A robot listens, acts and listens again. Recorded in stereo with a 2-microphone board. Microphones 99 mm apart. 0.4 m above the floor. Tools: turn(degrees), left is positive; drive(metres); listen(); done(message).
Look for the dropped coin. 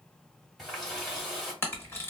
listen()
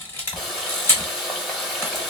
listen()
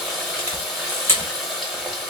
done("I can't make out a dropped coin to turn to.")